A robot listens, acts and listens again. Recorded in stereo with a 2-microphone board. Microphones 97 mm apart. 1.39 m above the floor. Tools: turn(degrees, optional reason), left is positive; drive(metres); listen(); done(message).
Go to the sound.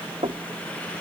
turn(degrees=-90)
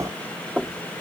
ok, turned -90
drive(metres=1.0)
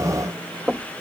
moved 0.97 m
turn(degrees=-10, reason="The knocking is now 10° right.")
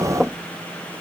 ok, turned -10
drive(metres=1.0)
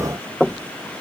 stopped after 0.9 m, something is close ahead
done("I am next to the knocking.")